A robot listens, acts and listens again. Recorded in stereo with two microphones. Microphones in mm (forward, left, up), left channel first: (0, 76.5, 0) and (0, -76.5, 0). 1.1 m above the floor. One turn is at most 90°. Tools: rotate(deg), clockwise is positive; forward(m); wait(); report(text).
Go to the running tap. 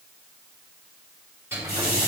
rotate(-75)
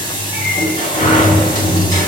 rotate(-30)
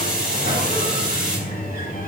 forward(1.0)
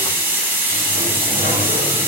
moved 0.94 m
rotate(15)
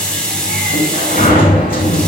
forward(1.0)
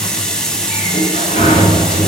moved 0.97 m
forward(1.0)
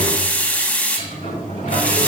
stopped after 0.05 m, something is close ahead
rotate(-10)
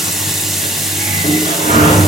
report("I am next to the running tap.")